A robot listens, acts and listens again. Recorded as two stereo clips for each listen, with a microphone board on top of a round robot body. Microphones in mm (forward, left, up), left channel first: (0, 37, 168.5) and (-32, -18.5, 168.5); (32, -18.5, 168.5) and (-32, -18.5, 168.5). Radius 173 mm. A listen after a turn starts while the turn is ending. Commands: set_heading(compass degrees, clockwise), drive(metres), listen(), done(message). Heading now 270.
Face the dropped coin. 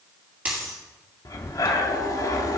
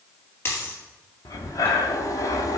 set_heading(320)
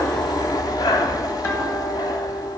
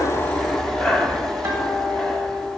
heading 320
done("I heard a dropped coin from this way, but can't make it out now.")